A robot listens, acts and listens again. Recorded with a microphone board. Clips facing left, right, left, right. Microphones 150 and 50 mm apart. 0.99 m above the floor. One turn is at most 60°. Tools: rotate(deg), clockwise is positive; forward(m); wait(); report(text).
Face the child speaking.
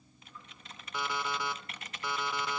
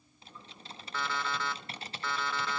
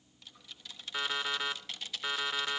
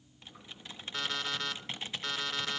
wait()
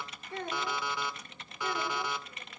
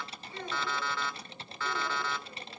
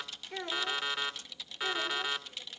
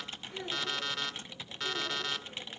rotate(-60)
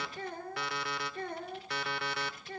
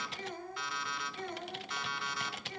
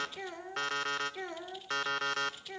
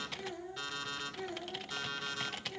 rotate(-60)
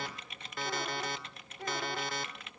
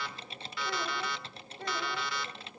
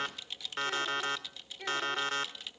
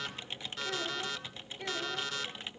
report("Found it: a child speaking, straight ahead.")